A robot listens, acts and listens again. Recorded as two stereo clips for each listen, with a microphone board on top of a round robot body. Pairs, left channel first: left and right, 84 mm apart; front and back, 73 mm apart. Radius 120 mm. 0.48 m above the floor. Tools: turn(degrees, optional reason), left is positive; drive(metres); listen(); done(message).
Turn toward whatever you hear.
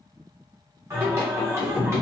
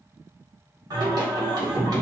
turn(degrees=-150, reason="The singing: 150° right.")
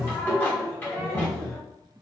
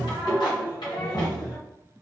turn(degrees=20, reason="The singing is now 20° left.")
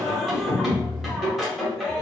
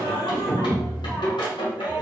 done("Found it: singing, straight ahead.")